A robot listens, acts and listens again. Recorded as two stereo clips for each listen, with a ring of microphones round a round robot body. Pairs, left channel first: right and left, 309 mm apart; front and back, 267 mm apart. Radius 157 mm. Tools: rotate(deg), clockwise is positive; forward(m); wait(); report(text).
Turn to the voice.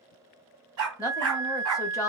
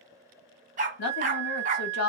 rotate(10)
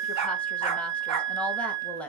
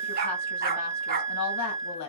report("Found it: a woman speaking, straight ahead.")